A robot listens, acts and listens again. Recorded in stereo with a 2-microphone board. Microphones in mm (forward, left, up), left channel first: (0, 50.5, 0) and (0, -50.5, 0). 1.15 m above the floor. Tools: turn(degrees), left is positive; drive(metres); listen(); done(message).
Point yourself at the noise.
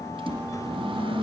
turn(degrees=-60)
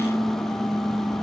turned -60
done("Facing the microwave.")